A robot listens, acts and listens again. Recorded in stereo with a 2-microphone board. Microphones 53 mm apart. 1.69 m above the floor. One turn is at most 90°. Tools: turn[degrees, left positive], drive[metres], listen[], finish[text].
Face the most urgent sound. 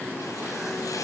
Action: listen[]
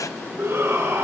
Thought: The shout: about 60° right or 120° right.
Action: turn[-60]
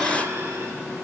Action: listen[]
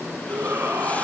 Thought: So it is at 60° right.
Action: turn[-60]
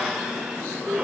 Thought: The shout is now 15° right.
Action: turn[-15]
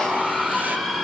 Action: finish[Found it: a shout, straight ahead, over 4 m away.]